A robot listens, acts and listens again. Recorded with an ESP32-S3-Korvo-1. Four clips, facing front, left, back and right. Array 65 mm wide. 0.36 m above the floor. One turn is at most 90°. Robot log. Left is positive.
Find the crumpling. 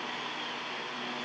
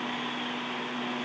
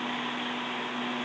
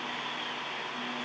cmd idle
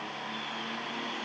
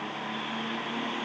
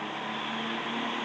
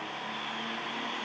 cmd idle
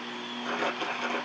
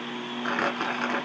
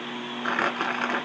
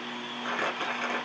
note: The crumpling: 160° left.
cmd yaw +90
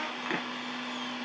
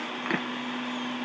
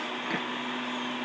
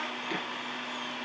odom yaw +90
note: The crumpling is now 80° left.
cmd yaw +80
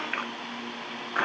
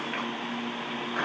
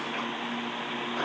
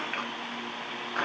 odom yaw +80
end: Facing the crumpling.